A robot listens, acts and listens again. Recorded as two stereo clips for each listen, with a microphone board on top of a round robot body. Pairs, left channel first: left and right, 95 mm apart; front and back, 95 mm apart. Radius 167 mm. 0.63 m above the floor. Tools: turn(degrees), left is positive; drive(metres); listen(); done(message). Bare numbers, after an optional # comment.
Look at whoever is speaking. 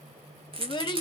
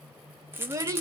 # The child speaking: 125° left.
turn(125)
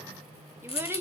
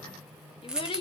# The child speaking is now 25° right.
turn(-25)
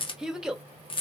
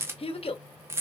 done("Found it: a child speaking, straight ahead.")